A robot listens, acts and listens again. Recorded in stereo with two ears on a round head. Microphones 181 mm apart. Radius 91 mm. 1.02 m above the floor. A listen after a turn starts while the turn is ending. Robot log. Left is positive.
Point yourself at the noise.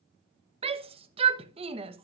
note: The shout: about 30° right or 150° right.
cmd yaw -30
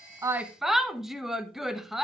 end: Found it: a shout, straight ahead.